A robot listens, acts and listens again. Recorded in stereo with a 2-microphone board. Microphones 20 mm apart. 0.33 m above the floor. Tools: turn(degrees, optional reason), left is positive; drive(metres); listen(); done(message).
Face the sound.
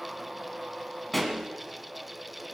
turn(degrees=30)
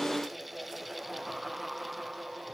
listen()
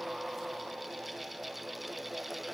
done("I heard a pop, but can't make it out now. It was about 20° right or 140° left.")